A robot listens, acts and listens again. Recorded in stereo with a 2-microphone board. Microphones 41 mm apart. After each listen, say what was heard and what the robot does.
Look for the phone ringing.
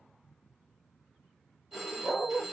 Turn 30° right.
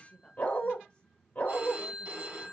So it is at 140° right. Turn 140° right.
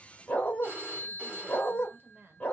The phone ringing is now 45° right. Turn 45° right.
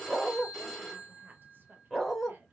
Found it: a phone ringing, straight ahead.